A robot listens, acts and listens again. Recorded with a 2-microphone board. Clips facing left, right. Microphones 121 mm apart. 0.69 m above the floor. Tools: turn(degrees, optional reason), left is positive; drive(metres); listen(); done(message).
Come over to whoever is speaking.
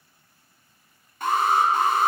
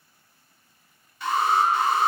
listen()
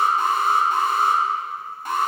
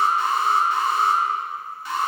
listen()
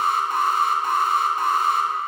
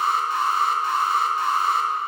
done("I can't make out anyone speaking, only an alarm.")